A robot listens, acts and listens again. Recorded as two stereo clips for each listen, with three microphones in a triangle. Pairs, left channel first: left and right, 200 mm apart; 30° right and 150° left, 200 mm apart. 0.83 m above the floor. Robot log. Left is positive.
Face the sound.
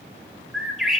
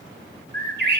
note: The bird: straight behind.
cmd yaw +180
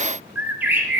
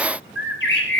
note: The bird is now 10° right.
cmd yaw -10
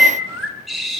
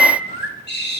end: Found it: a bird, straight ahead, over 4 m away.